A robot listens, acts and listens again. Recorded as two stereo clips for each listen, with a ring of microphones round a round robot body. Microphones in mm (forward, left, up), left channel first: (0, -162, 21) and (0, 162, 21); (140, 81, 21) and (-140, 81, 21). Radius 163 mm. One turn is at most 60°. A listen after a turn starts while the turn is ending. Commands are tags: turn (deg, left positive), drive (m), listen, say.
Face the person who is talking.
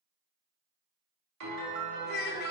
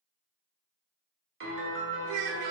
<turn deg="-60"/>
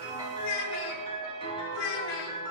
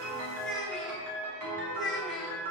<turn deg="-60"/>
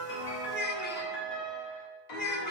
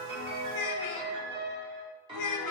<turn deg="-30"/>
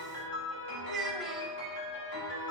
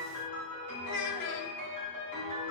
<say>Found it: a child speaking, straight ahead, under 1 m away.</say>